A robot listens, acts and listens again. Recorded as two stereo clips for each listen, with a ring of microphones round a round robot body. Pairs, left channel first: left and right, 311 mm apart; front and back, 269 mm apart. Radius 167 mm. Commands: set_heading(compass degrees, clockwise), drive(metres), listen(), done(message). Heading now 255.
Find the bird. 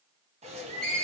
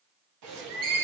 set_heading(55)
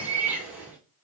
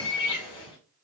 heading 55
done("Facing the bird, 1 to 2 m away.")